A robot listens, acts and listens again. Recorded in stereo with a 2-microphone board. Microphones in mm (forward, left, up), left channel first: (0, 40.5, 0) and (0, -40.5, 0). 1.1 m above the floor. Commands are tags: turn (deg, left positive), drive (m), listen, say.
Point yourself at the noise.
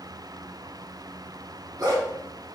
<turn deg="-50"/>
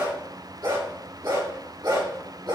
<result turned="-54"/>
<turn deg="-75"/>
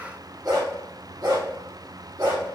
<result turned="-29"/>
<turn deg="-50"/>
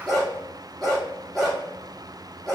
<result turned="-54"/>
<say>Found it: a dog barking, straight ahead.</say>